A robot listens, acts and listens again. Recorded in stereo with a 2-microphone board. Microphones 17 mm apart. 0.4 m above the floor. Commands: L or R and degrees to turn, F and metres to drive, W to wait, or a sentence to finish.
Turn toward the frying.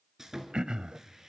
W
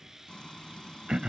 L55
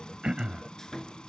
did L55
L65
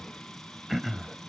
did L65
L15
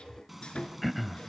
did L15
Found it: frying, straight ahead.